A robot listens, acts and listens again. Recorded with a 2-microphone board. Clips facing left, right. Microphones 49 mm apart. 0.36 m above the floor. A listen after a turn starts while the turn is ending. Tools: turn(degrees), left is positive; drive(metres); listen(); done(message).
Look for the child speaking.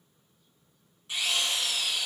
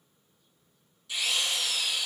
listen()
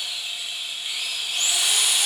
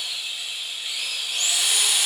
listen()
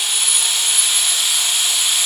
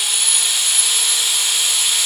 done("I can't make out a child speaking, only a drill.")